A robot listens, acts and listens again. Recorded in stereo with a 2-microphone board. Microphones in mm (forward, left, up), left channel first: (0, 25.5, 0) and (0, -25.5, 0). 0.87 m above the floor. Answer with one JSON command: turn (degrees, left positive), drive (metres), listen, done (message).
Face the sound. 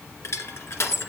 {"turn": 65}
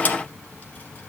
{"listen": true}
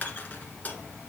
{"turn": 35}
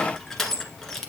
{"done": "Facing the crushing, 1 to 2 m away."}